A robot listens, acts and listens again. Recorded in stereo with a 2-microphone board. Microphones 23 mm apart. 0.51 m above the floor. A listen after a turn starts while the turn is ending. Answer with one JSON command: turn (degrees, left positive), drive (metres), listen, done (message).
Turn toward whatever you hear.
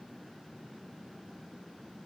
{"listen": true}
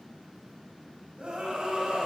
{"turn": -50}
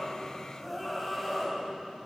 {"done": "Facing the scream."}